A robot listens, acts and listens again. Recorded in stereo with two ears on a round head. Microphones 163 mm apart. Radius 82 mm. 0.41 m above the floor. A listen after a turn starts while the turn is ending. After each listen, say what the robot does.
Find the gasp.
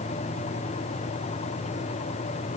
Keep listening.
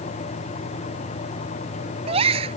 Turn 30° right.
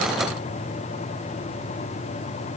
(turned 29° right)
Keep listening.
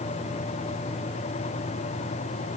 I heard a gasp, but can't make it out now. It was about 5° right or 120° right.